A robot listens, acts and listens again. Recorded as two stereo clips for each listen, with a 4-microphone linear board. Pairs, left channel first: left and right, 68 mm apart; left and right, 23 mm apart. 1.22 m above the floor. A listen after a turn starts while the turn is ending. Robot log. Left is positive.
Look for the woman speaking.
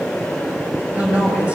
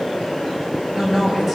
note: The woman speaking: about 20° right or 160° right.
cmd yaw -20
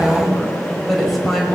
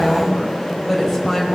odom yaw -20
end: Found it: a woman speaking, straight ahead, over 4 m away.